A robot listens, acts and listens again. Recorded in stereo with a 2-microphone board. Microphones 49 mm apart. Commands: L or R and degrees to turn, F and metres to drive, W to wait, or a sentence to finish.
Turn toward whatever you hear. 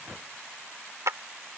R90
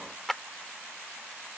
Found it: a clap, straight ahead.